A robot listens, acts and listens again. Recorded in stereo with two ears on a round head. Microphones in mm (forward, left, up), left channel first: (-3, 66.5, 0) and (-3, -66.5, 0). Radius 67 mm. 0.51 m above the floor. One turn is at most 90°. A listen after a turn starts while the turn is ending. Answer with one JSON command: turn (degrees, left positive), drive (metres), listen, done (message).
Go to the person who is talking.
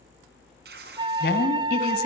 {"turn": 75}
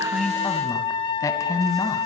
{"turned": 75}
{"turn": 20}
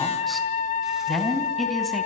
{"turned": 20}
{"drive": 1.0}
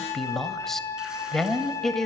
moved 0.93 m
{"drive": 1.0}
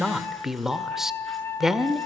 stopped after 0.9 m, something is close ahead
{"done": "I am next to the woman speaking."}